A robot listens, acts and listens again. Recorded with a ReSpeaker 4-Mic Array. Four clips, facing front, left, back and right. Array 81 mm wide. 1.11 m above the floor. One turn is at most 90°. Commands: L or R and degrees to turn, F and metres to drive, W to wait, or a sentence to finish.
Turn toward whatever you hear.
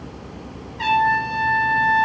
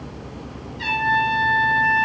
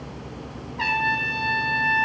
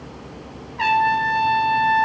R90
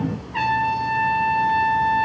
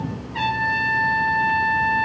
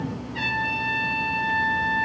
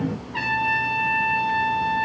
R20
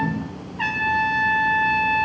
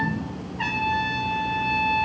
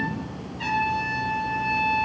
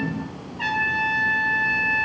Facing the trumpet, 2 to 4 m away.